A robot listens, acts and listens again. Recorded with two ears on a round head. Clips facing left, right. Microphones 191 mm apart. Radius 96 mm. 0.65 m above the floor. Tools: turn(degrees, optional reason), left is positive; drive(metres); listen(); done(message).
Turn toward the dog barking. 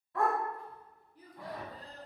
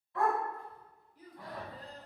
turn(degrees=40, reason="The dog barking: about 40° left or 140° left.")
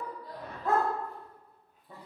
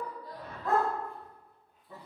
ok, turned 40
turn(degrees=25, reason="So it is at 25° left.")
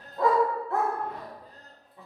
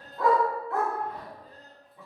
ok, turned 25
turn(degrees=35, reason="The dog barking is now 35° left.")
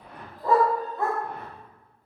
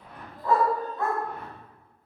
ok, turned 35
turn(degrees=30, reason="The dog barking is now 30° left.")
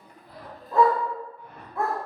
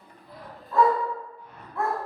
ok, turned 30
turn(degrees=20, reason="The dog barking is now 20° left.")
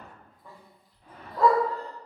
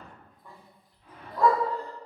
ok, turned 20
done("Found it: a dog barking, straight ahead.")